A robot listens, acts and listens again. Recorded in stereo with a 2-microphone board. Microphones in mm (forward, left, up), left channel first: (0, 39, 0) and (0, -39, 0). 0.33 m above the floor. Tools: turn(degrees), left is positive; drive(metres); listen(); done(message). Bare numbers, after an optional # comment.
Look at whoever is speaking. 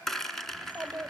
# The child speaking: about 25° right or 155° right.
turn(-25)
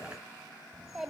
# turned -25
done("Found it: a child speaking, straight ahead.")